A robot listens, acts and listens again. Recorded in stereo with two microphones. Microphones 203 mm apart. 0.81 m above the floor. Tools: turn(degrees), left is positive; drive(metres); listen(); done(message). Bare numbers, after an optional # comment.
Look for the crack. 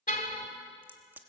turn(-30)
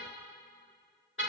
listen()
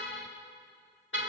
done("I heard a crack, but can't make it out now. It was about 20° left or 140° right.")